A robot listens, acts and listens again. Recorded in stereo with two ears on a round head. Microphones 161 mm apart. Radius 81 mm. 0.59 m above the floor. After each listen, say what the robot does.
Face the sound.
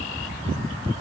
Keep listening.
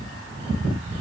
Keep listening.
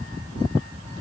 I can't make out anything to turn to.